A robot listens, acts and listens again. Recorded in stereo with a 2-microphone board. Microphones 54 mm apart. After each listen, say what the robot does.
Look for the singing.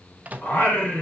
Turn 30° left.
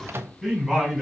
Found it: singing, straight ahead.